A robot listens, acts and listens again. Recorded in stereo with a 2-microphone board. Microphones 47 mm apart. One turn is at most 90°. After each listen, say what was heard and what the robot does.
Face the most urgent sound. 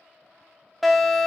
Turn 30° left.
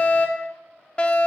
So it is at 150° left. Turn 90° left.
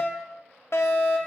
The fire alarm is now 80° left. Turn 80° left.
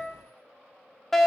The fire alarm is now 10° left. Turn 10° left.
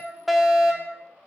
Found it: a fire alarm, straight ahead.